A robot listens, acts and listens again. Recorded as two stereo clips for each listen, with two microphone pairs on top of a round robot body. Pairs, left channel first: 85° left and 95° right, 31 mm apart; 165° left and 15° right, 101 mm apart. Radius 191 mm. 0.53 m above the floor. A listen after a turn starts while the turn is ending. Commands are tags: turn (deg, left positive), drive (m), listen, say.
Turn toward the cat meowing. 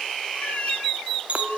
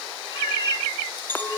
<turn deg="125"/>
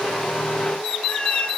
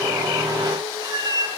<turn deg="30"/>
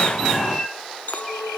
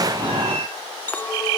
<turn deg="-10"/>
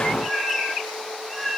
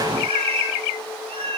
<say>Found it: a cat meowing, straight ahead, 2 to 4 m away.</say>